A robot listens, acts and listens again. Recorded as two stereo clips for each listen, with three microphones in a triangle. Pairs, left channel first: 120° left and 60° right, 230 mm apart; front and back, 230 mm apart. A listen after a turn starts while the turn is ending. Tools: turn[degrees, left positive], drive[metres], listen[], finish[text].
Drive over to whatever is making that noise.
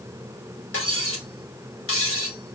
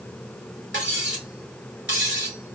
Thought: The cutlery clinking: 140° left.
Action: turn[140]
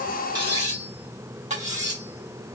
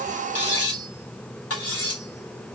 Action: drive[1.0]
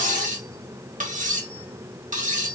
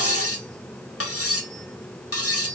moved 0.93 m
Action: drive[1.0]
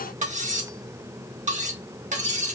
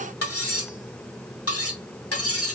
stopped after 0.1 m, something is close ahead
Action: finish[Arrived at the cutlery clinking, straight ahead.]